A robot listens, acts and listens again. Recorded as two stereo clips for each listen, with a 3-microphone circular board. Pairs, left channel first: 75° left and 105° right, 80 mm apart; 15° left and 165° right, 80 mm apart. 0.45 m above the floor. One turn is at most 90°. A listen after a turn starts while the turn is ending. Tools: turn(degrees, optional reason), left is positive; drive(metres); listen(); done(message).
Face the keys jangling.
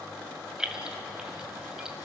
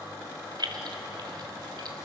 turn(degrees=90, reason="The keys jangling: 175° left.")
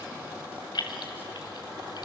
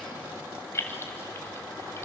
turn(degrees=70, reason="The keys jangling is now 70° left.")
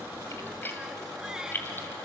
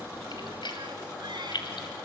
turn(degrees=15, reason="The keys jangling is now 15° left.")
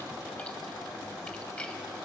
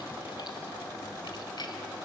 listen()
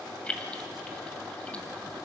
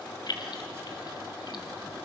done("Facing the keys jangling, 1 to 2 m away.")